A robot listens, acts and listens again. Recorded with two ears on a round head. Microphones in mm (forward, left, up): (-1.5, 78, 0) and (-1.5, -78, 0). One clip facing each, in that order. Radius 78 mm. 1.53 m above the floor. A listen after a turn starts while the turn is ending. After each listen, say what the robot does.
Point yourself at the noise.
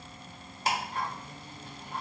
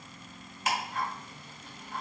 Turn 30° left.
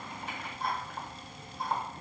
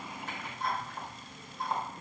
Found it: ticking, straight ahead.